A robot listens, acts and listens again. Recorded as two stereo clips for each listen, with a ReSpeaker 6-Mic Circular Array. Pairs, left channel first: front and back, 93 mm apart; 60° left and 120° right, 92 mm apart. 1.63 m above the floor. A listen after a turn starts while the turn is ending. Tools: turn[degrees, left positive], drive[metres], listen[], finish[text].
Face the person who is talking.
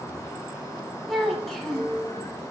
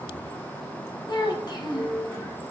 Thought: The child speaking: 85° left.
Action: turn[85]
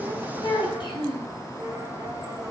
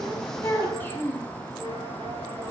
Action: finish[Found it: a child speaking, straight ahead, 1 to 2 m away.]